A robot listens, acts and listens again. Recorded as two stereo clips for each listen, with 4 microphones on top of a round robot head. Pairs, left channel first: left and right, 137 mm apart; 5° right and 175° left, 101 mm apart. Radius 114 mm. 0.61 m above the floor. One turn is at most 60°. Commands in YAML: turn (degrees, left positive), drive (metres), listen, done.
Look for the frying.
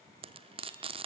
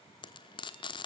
turn: -45
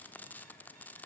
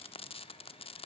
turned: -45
turn: 10
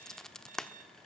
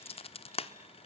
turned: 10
done: "Facing the frying."